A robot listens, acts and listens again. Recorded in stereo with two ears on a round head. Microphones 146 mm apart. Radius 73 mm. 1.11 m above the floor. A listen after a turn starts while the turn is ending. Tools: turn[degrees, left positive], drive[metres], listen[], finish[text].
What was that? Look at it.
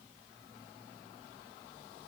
Action: listen[]
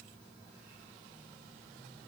Action: listen[]
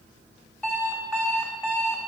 Action: turn[30]
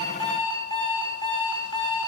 Thought: So it is at 140° left.
Action: turn[140]
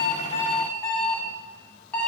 Action: finish[Found it: an alarm clock, straight ahead, 1 to 2 m away.]